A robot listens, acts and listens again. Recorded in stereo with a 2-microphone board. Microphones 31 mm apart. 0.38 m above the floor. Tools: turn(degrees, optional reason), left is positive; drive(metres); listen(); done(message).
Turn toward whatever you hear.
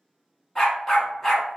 turn(degrees=30)
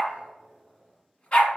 turn(degrees=140, reason="So it is at 140° left.")
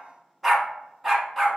done("Found it: a dog barking, straight ahead, 1 to 2 m away.")